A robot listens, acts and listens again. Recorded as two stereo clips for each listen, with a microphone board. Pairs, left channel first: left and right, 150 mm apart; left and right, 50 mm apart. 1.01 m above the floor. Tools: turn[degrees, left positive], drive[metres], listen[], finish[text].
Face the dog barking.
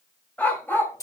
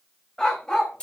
Action: turn[30]
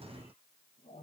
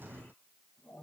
Action: listen[]
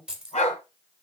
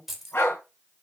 Thought: So it is at 120° left.
Action: turn[120]
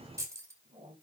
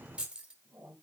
Action: listen[]
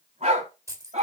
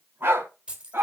Thought: The dog barking is now 55° right.
Action: turn[-55]
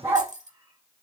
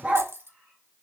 Thought: The dog barking is now 20° right.
Action: turn[-20]
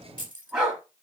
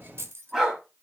Action: finish[Found it: a dog barking, straight ahead.]